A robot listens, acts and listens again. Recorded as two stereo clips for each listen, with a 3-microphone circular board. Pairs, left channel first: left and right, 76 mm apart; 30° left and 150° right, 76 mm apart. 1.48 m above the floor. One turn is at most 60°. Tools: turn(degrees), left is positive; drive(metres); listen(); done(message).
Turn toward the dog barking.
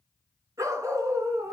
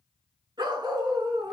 turn(degrees=-60)
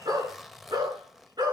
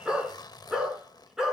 turn(degrees=-60)
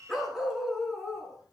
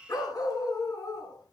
done("Facing the dog barking, over 4 m away.")